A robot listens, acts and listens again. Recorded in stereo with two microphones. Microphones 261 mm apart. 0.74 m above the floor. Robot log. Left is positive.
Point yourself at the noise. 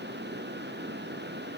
cmd idle
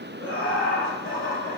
note: The laughter: about 50° left or 130° left.
cmd yaw +50
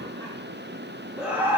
note: So it is at 10° right.
cmd yaw -10
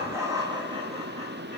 note: The laughter is now 20° right.
cmd yaw -20
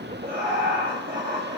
note: The laughter is now 35° right.
cmd yaw -35
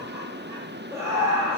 note: The laughter is now 10° right.
cmd yaw -10
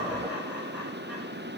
end: Found it: laughter, straight ahead, 1 to 2 m away.